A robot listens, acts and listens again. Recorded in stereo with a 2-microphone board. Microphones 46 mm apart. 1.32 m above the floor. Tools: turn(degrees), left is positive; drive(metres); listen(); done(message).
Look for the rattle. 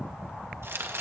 listen()
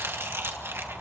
listen()
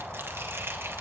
done("I can't make out a rattle to turn to.")